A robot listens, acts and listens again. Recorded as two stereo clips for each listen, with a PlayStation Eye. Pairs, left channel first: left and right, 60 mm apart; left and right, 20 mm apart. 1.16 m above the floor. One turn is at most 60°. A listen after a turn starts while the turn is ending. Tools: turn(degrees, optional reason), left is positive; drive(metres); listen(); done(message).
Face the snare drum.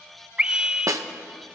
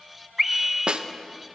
turn(degrees=-60, reason="The snare drum: about 65° right or 115° right.")
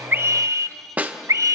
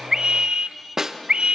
turn(degrees=-30, reason="So it is at 30° right.")
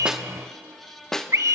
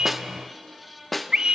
turn(degrees=10, reason="The snare drum is now 10° left.")
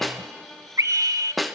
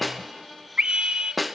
done("Found it: a snare drum, straight ahead, 1 to 2 m away.")